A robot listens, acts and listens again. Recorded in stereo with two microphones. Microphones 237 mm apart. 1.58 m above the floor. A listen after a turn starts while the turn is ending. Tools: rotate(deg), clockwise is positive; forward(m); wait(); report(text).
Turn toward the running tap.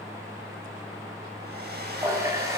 rotate(30)
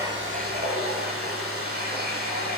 rotate(140)
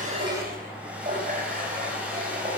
rotate(35)
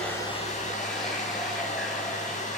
wait()
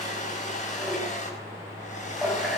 report("Found it: a running tap, straight ahead, over 4 m away.")